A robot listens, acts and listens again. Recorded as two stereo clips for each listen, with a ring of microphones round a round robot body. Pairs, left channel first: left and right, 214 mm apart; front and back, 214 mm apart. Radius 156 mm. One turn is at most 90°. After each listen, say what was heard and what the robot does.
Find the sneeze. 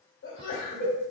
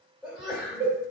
The sneeze: 90° left. Turn 90° left.
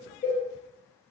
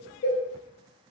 I heard a sneeze from this way, but can't make it out now.